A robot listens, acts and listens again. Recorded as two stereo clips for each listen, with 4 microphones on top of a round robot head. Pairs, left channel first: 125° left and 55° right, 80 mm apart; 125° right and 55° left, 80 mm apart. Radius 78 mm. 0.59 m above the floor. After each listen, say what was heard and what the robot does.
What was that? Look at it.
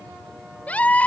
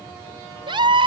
The scream: 55° left. Turn 55° left.
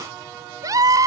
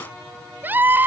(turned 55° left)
The scream is now 10° right. Turn 10° right.
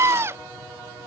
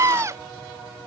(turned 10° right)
Found it: a scream, straight ahead.